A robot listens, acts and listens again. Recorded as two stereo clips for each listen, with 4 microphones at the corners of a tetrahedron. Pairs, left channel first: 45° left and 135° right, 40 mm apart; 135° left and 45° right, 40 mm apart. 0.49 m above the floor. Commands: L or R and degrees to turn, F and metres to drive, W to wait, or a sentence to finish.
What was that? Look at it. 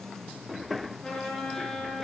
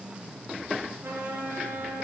R30
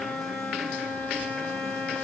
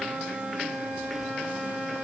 Found it: a trumpet, straight ahead.